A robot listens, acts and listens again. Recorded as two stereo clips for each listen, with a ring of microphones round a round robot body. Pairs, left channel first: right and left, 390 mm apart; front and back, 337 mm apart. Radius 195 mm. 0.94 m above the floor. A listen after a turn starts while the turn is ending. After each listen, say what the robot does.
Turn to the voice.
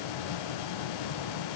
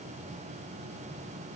Keep listening.
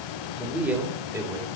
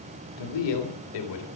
Turn 10° left.
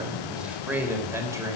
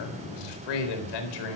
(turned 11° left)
Turn 10° left.
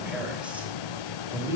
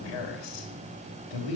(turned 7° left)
Found it: a man speaking, straight ahead, over 4 m away.